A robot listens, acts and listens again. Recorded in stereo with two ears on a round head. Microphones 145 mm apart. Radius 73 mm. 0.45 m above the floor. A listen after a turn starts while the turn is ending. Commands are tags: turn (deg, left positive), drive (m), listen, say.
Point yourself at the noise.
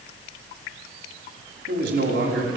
<turn deg="-90"/>
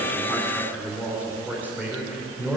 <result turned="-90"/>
<turn deg="-15"/>
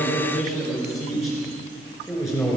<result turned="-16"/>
<say>Found it: a man speaking, straight ahead.</say>